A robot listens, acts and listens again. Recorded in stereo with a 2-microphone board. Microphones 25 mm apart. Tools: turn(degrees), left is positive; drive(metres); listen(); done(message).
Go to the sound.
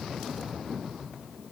listen()
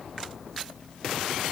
listen()
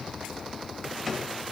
turn(degrees=-30)
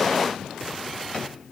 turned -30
listen()
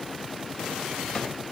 listen()
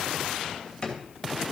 turn(degrees=25)
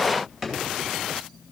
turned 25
turn(degrees=-10)
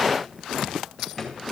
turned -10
drive(metres=1.0)
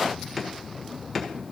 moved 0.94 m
drive(metres=1.0)
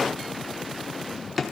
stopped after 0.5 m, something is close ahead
done("Arrived at the drawer, straight ahead.")